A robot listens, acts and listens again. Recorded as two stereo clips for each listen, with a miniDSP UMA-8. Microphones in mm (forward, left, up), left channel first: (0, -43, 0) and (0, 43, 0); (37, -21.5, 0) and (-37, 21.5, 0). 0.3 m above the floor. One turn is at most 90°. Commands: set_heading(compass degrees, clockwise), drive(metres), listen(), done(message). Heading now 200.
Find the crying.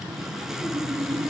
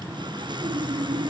listen()
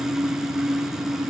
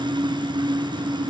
listen()
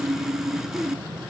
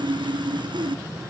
done("I can't make out crying, only sawing.")